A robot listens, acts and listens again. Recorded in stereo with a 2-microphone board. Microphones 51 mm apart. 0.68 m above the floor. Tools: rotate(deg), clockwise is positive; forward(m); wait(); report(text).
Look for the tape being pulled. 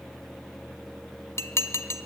wait()
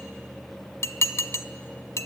wait()
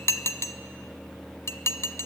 report("I can't make out tape being pulled, only dishes clattering.")